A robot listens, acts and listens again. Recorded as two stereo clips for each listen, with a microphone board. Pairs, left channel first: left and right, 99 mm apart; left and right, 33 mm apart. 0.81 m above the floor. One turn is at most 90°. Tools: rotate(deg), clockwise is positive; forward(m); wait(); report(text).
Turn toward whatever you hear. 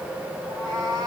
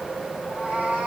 rotate(35)
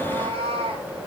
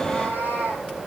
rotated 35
rotate(90)
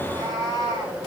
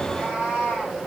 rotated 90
rotate(40)
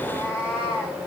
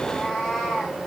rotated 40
rotate(15)
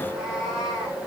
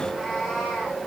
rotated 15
report("Facing the cat meowing, over 4 m away.")